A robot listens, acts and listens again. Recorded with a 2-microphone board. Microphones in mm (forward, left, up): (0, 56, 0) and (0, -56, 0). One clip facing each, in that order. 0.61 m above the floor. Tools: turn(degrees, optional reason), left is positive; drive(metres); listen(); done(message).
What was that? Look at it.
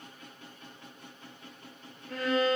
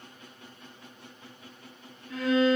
turn(degrees=60, reason="The violin: about 60° left or 120° left.")
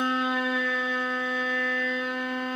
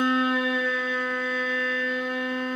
done("Facing the violin.")